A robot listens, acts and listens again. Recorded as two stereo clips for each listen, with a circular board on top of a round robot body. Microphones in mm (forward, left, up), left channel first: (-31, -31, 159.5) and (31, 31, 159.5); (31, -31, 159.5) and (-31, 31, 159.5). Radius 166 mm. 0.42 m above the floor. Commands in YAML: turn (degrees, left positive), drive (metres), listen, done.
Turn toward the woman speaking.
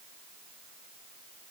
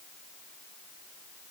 listen: true
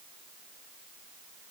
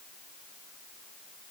listen: true
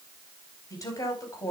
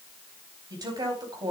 turn: 170
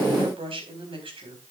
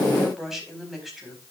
turn: 45
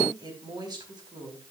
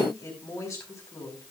done: "Found it: a woman speaking, straight ahead."